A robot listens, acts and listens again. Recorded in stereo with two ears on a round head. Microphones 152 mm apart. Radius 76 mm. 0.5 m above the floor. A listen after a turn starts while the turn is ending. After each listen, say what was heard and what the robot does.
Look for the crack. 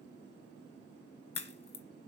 The crack: about 35° left or 145° left. Turn 35° left.
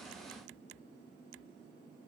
Keep listening.
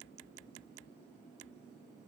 I heard a crack, but can't make it out now. It was about straight ahead or 110° left.